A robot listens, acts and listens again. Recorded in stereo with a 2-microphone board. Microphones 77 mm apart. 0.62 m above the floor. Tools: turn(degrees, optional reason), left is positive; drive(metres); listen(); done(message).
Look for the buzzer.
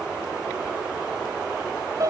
listen()
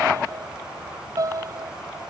listen()
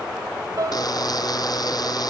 turn(degrees=55, reason="The buzzer: about 55° left or 125° left.")
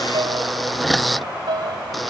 done("Facing the buzzer.")